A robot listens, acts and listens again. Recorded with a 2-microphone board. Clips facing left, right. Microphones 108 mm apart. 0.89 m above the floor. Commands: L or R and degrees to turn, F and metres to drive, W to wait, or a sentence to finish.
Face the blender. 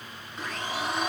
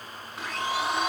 R30
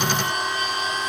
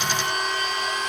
L25
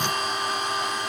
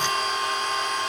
L15
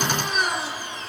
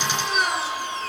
Facing the blender.